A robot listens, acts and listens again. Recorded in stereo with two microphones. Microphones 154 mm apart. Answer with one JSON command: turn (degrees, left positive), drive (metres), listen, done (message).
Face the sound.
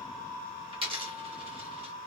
{"turn": -35}
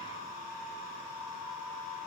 {"listen": true}
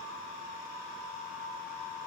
{"done": "I heard a dropped coin, but can't make it out now. It was about straight ahead or 110° right."}